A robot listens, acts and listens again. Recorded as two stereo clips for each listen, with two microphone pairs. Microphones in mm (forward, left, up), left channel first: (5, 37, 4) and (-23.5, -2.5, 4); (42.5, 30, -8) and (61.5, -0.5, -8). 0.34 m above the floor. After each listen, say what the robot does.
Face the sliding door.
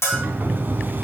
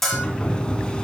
Turn 175° right.
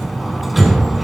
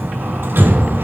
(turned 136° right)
Turn 40° right.
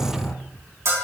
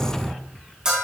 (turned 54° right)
Turn 15° left.
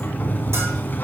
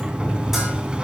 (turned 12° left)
Facing the sliding door, under 1 m away.